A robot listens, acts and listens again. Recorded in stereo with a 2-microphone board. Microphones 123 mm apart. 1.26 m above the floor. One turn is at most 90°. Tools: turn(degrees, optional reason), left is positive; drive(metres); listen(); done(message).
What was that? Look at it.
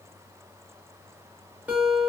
turn(degrees=-30)
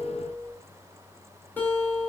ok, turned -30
turn(degrees=15, reason="So it is at 15° left.")
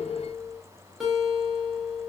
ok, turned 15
done("Facing the guitar, under 1 m away.")